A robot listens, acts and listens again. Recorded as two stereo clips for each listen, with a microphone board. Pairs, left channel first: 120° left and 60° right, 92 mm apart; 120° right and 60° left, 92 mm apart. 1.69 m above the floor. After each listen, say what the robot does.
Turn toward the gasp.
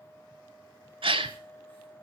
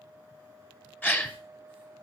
Turn 50° right.
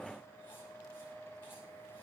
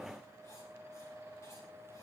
Facing where the gasp came from. I can't hear it now.